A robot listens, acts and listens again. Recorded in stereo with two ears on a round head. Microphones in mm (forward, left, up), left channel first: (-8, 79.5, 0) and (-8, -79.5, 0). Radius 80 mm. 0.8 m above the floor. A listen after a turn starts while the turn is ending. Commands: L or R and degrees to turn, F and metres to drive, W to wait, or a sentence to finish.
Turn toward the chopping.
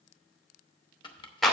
L30
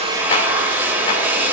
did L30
W
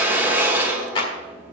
W
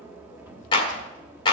I heard chopping, but can't make it out now. It was about straight ahead or 120° left.